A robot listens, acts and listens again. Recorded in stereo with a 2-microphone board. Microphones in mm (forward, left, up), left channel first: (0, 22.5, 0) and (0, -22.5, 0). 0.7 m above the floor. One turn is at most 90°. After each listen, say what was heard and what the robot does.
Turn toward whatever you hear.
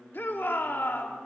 The shout: about 50° left or 130° left. Turn 50° left.
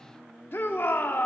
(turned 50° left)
So it is at 70° left. Turn 70° left.
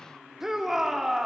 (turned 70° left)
The shout is now 10° right. Turn 10° right.
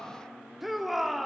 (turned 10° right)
Found it: a shout, straight ahead.